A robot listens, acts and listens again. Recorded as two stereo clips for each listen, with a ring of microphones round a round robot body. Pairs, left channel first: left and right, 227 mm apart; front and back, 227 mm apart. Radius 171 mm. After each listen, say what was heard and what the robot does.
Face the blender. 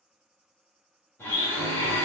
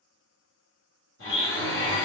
The blender: 10° left. Turn 10° left.
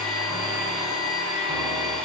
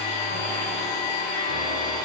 Facing the blender, 1 to 2 m away.